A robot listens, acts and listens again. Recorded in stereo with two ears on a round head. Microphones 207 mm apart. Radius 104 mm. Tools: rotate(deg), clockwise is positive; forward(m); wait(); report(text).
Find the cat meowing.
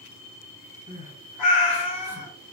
rotate(-70)
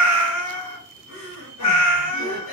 rotate(-25)
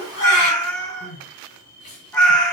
report("Facing the cat meowing.")